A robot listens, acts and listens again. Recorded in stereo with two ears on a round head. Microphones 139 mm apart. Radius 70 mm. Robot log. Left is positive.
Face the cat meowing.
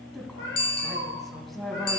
cmd yaw +90
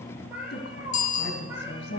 note: So it is at 15° right.
cmd yaw -15
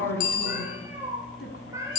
note: The cat meowing is now 20° right.
cmd yaw -20
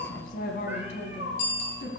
note: The cat meowing is now 10° right.
cmd yaw -10
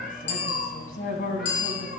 end: Facing the cat meowing, 2 to 4 m away.